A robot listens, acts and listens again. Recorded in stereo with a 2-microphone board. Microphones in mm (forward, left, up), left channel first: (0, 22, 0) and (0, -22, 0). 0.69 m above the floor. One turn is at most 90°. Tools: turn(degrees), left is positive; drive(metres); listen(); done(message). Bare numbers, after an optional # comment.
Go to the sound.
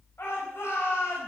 # The shout: about 60° left or 120° left.
turn(60)
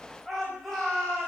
drive(1.0)
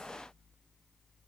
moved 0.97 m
listen()
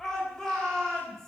# The shout is now 10° left.
turn(10)
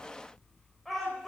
drive(1.0)
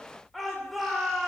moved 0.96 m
drive(1.0)
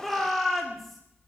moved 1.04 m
drive(1.0)
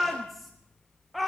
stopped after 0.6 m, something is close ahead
done("I am next to the shout.")